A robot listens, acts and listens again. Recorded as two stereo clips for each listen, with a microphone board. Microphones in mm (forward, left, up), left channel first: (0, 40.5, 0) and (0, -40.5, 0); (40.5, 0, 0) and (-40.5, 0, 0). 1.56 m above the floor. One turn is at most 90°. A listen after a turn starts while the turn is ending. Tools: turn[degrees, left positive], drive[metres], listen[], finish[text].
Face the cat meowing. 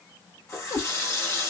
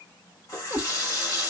Thought: The cat meowing: 85° left.
Action: turn[85]
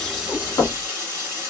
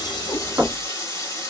Action: listen[]
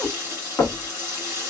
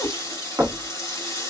Thought: The cat meowing is now 10° left.
Action: turn[10]
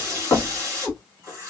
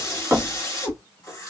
Action: finish[Found it: a cat meowing, straight ahead.]